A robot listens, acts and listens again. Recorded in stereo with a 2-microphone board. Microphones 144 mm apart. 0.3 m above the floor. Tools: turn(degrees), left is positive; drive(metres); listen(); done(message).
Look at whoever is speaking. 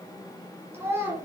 turn(degrees=-15)
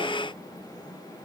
listen()
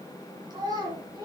turn(degrees=-150)
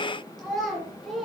done("Facing the child speaking, over 4 m away.")